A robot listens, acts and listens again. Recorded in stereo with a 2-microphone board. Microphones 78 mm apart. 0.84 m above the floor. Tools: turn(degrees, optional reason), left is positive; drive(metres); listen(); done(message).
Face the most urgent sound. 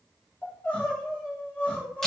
turn(degrees=25, reason="The crying: about 25° left or 155° left.")
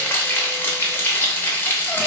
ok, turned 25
listen()
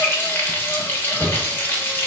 listen()
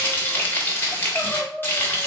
done("Found it: crying, straight ahead.")